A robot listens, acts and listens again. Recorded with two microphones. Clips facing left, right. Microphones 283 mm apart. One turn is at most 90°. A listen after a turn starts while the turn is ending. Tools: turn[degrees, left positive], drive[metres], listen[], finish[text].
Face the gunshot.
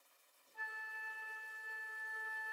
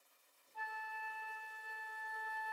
Action: listen[]
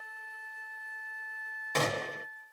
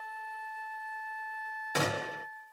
Action: turn[-30]
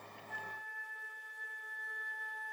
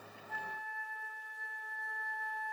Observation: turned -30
Action: listen[]
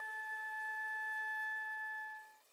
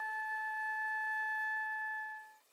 Action: finish[I heard a gunshot, but can't make it out now. It was about 20° left or 140° right.]